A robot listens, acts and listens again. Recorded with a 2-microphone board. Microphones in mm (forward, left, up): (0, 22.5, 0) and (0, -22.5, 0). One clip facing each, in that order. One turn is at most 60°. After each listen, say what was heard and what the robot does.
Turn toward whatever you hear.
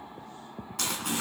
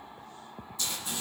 Turn 60° left.
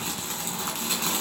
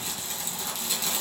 So it is at 45° left. Turn 45° left.
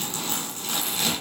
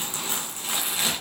The crumpling is now 15° right. Turn 15° right.
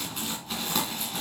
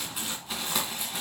Facing the crumpling, 2 to 4 m away.